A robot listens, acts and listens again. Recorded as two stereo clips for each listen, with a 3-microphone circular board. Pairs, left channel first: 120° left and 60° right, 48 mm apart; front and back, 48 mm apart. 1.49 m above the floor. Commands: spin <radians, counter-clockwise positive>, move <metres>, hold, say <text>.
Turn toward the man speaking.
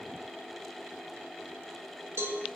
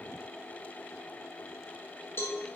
hold
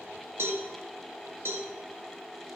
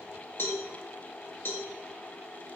hold
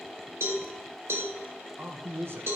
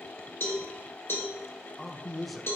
spin -1.57
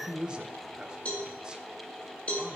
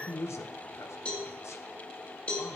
spin 0.17
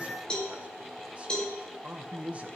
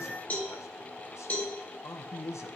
say Found it: a man speaking, straight ahead.